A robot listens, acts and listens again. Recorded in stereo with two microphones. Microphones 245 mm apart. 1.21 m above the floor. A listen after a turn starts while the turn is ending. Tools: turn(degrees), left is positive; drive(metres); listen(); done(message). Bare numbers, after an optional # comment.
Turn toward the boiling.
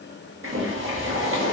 # The boiling: about 55° right or 125° right.
turn(-55)
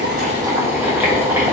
# So it is at 10° right.
turn(-10)
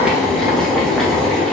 done("Facing the boiling, under 1 m away.")